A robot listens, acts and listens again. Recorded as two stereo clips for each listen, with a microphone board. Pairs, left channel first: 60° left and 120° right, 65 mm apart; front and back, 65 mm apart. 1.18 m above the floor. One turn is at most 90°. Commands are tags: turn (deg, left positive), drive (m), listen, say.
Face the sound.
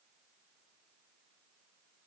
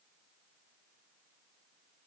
<listen/>
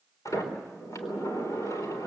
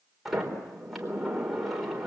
<turn deg="90"/>
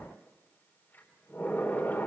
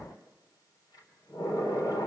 <say>Facing the sliding door, 2 to 4 m away.</say>